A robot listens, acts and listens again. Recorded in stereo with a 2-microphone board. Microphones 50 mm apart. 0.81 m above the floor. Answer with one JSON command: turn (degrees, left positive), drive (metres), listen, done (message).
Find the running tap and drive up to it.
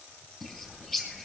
{"listen": true}
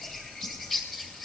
{"listen": true}
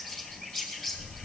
{"done": "I can't make out a running tap, only a bird."}